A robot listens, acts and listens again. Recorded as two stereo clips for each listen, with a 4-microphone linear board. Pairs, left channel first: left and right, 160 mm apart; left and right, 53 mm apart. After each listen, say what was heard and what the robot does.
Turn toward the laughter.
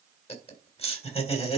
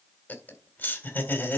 The laughter: about 40° left or 140° left. Turn 40° left.
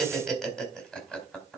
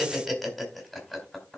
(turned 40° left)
Facing the laughter, 2 to 4 m away.